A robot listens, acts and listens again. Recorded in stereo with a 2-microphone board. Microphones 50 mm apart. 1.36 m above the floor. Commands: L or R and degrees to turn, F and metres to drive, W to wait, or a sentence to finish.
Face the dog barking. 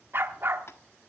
R50
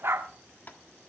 R70
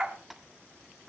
R20
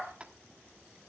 Facing the dog barking, 1 to 2 m away.